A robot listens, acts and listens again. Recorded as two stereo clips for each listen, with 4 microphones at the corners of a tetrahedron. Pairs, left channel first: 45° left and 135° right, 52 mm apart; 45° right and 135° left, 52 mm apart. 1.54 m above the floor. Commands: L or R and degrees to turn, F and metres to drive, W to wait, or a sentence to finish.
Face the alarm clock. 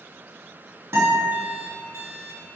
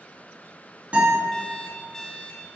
R120
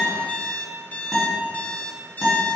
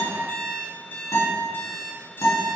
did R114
Facing the alarm clock, 1 to 2 m away.